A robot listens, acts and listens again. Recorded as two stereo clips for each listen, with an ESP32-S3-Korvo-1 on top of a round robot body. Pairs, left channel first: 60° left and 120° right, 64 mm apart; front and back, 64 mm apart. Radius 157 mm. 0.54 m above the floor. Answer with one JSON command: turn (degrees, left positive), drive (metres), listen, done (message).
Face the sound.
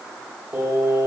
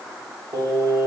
{"turn": -165}
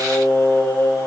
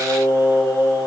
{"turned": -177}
{"turn": 25}
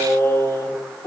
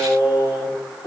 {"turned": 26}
{"turn": 10}
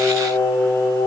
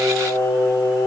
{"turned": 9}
{"done": "Facing the singing."}